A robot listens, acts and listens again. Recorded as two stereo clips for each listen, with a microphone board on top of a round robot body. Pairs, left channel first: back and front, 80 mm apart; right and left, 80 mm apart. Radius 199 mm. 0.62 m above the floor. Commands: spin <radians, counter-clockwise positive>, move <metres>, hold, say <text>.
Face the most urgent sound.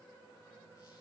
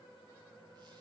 hold
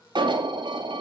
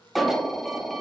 say Found it: an alarm, straight ahead.